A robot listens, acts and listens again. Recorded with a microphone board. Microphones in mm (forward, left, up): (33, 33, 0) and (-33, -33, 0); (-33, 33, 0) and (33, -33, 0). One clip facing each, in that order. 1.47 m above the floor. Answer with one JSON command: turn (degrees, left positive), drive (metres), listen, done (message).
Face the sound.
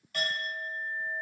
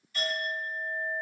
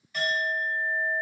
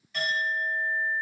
{"turn": 50}
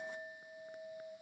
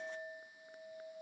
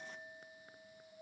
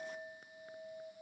{"turn": -15}
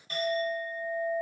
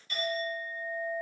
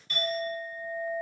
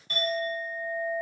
{"done": "Facing the clink."}